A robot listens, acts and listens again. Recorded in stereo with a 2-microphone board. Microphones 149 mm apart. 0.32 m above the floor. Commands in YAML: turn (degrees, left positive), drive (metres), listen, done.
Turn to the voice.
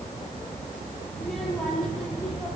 turn: 30
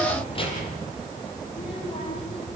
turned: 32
turn: 140
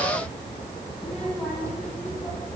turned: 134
done: "Found it: a child speaking, straight ahead."